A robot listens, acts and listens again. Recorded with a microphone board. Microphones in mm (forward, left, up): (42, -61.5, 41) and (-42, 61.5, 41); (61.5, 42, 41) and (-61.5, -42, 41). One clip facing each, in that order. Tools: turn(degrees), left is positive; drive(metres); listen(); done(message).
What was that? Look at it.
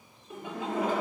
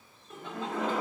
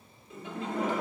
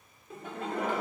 turn(degrees=-135)
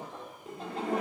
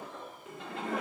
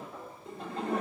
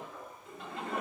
turn(degrees=-15)
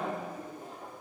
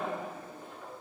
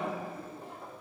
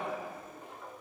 turn(degrees=-15)
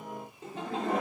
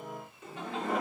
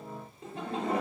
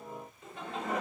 turn(degrees=-15)
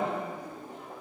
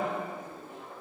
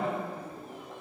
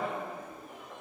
turn(degrees=-15)
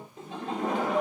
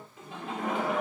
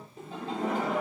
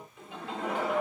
turn(degrees=-10)
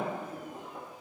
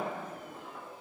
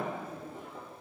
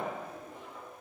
done("Facing the laughter.")